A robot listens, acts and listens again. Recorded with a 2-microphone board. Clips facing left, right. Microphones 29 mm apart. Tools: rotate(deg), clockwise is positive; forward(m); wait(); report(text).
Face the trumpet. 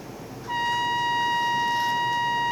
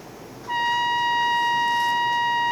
rotate(30)
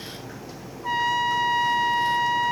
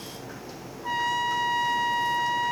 rotate(-15)
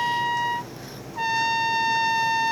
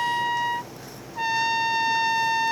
report("Facing the trumpet.")